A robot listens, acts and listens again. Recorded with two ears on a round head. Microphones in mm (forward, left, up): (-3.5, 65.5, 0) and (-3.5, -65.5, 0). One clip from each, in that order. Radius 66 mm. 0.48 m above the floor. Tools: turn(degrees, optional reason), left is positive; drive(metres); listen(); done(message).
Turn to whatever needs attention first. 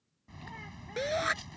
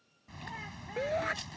turn(degrees=75, reason="The shout: about 75° left or 105° left.")
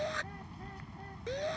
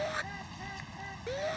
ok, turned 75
done("Found it: a shout, straight ahead.")